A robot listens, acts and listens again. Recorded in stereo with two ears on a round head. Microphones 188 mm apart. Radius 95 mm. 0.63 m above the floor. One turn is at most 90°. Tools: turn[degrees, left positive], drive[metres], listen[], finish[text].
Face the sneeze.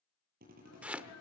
Thought: The sneeze: about 75° left or 105° left.
Action: turn[75]
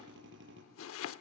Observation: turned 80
Action: listen[]
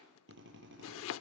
Action: finish[I heard a sneeze, but can't make it out now. It was about 5° right or 25° left.]